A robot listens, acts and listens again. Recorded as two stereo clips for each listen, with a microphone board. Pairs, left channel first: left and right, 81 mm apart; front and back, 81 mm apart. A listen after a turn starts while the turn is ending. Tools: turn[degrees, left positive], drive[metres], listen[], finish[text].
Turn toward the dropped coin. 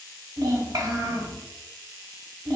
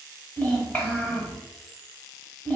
Action: listen[]
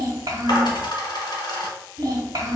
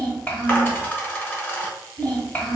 Thought: The dropped coin: 65° left.
Action: turn[65]
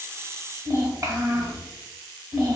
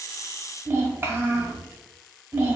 Action: finish[Facing where the dropped coin came from. I can't hear it now.]